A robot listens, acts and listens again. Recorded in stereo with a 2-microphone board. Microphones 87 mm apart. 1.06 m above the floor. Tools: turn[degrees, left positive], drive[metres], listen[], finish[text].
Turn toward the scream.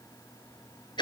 Action: listen[]
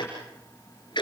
Action: listen[]
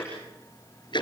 Action: finish[I can't make out a scream, only ticking.]